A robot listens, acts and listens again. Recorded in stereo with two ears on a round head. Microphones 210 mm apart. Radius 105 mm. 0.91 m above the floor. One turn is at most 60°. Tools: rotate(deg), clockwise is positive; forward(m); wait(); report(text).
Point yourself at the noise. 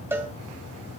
rotate(30)
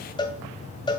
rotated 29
rotate(-20)
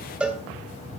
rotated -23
report("Facing the cowbell, 2 to 4 m away.")